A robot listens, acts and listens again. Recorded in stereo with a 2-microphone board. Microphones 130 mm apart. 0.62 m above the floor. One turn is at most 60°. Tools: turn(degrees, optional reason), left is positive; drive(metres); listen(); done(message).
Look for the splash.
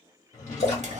turn(degrees=55, reason="The splash: about 55° left or 125° left.")
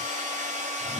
listen()
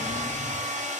done("I heard a splash, but can't make it out now. It was about straight ahead or 70° left.")